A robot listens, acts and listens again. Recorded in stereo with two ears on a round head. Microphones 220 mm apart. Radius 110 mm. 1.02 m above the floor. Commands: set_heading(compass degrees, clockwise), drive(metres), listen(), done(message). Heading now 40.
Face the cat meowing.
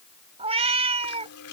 set_heading(65)
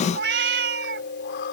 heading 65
set_heading(195)
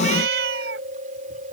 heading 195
set_heading(250)
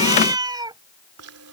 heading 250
set_heading(265)
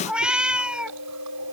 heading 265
done("Found it: a cat meowing, straight ahead.")